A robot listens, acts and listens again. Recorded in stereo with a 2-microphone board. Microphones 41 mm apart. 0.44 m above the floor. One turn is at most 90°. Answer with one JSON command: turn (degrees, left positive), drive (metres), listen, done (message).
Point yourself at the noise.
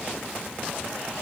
{"listen": true}
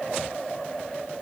{"listen": true}
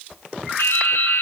{"turn": 90}
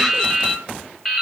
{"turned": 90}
{"done": "Found it: dripping, straight ahead."}